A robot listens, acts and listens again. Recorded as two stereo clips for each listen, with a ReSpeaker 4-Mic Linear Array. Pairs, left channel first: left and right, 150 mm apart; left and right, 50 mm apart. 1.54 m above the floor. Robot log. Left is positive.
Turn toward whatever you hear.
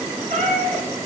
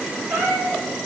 cmd yaw -90
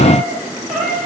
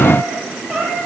end: Found it: a cat meowing, straight ahead.